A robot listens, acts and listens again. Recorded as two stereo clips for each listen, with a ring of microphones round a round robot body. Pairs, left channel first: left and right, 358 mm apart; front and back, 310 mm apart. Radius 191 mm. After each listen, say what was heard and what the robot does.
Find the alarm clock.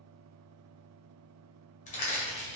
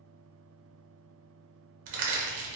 Keep listening.
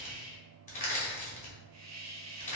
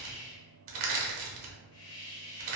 Keep listening.
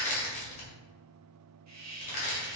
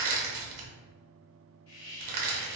I can't make out an alarm clock to turn to.